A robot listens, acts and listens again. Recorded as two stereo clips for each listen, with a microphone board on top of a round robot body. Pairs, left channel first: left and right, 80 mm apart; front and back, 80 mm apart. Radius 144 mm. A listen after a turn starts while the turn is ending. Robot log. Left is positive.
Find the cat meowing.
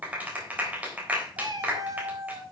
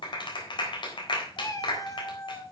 note: The cat meowing: 45° right.
cmd yaw -45
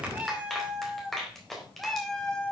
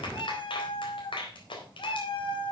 note: The cat meowing is now 10° left.
cmd yaw +10
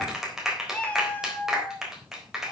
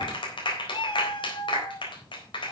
note: The cat meowing is now 25° left.
cmd yaw +25
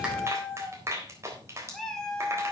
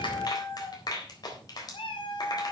end: Facing the cat meowing, 2 to 4 m away.